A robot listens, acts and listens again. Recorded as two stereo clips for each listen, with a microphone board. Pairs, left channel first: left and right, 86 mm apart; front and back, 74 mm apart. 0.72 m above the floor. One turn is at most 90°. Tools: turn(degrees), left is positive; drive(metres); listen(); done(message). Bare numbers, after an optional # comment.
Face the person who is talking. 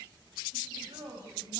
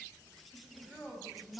# The woman speaking: 90° right.
turn(-90)
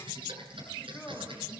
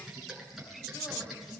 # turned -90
listen()
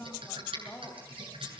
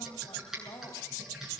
# The woman speaking is now 25° left.
turn(25)
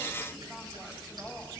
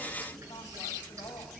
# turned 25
listen()
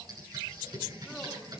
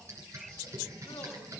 listen()
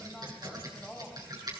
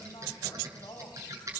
done("Found it: a woman speaking, straight ahead, over 4 m away.")